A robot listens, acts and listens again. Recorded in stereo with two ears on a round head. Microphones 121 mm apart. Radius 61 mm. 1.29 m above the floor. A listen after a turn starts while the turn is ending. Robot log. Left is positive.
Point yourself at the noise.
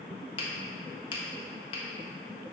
note: The finger snap: about 40° left or 140° left.
cmd yaw +40
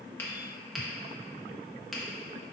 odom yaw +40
end: Facing the finger snap.